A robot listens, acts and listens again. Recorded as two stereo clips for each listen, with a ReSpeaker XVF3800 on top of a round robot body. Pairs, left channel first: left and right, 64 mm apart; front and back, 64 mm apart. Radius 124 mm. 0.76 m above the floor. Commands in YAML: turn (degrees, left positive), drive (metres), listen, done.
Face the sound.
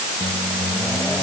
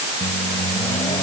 turn: 30
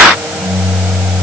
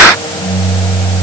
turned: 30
turn: -10
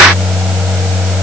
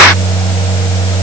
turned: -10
done: "Found it: a microwave, straight ahead."